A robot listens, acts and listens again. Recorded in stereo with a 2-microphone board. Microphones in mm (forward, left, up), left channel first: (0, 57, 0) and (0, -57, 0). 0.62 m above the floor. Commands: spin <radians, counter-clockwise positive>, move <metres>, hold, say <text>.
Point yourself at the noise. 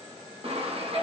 spin -1.05
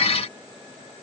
hold
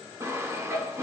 spin -0.52
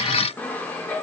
spin 0.26
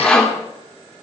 spin 0.17
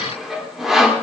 say Found it: sawing, straight ahead, 1 to 2 m away.